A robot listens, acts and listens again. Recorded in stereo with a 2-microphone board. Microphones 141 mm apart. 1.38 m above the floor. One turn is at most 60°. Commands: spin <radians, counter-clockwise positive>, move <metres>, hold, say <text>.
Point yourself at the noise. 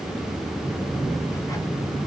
hold
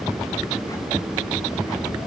hold
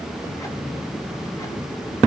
say I can't make out anything.